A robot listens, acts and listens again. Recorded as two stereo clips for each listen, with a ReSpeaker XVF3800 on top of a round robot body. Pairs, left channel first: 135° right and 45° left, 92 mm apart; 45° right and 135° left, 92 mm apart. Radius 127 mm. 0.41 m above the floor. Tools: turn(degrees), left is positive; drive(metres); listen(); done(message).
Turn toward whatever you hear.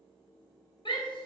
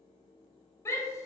turn(degrees=-105)
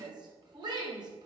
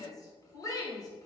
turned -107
done("Facing the shout, 2 to 4 m away.")